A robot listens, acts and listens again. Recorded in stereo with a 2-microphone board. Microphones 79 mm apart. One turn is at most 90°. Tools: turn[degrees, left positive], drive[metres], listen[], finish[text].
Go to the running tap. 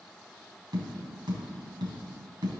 Action: listen[]
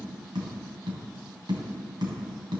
Action: listen[]
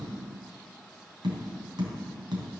Action: finish[I can't make out a running tap to turn to.]